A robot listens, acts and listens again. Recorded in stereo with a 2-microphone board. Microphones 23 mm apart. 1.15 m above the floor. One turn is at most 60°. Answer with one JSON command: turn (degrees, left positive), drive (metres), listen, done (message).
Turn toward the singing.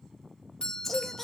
{"turn": 30}
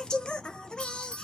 {"turn": 60}
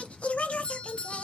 {"turn": 60}
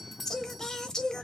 {"turn": 25}
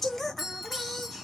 {"turn": 15}
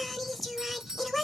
{"done": "Facing the singing, under 1 m away."}